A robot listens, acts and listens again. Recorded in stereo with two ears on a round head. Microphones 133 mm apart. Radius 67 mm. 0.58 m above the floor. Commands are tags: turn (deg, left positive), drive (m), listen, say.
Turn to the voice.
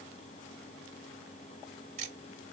<listen/>
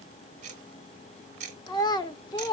<turn deg="30"/>
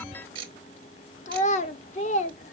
<turn deg="120"/>
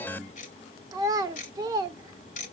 <turn deg="-30"/>
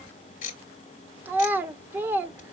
<turn deg="-15"/>
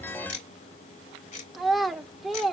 <say>Facing the child speaking, 1 to 2 m away.</say>